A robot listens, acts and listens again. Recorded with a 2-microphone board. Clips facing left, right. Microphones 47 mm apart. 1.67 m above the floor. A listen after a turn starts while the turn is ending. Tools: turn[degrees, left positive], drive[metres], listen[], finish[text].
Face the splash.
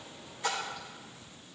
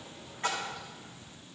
Thought: The splash: about 50° right or 130° right.
Action: turn[-50]
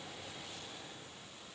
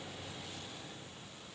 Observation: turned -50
Action: listen[]
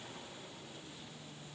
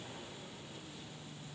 Action: finish[I heard a splash, but can't make it out now. It was about straight ahead or 80° right.]